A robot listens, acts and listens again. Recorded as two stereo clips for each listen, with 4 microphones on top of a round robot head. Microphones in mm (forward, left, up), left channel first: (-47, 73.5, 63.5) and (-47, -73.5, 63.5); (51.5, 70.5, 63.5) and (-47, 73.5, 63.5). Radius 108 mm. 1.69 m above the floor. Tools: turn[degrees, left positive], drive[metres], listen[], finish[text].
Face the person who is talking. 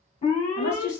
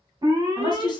Thought: The woman speaking: 45° left.
Action: turn[45]
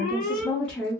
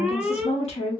Action: finish[Found it: a woman speaking, straight ahead.]